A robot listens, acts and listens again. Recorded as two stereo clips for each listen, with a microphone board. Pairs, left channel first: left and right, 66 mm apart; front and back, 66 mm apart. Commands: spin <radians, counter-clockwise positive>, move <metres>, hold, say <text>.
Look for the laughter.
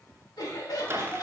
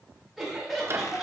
spin 1.66
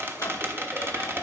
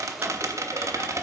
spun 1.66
hold
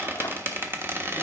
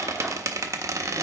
hold
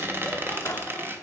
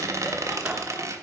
say Facing where the laughter came from. I can't hear it now.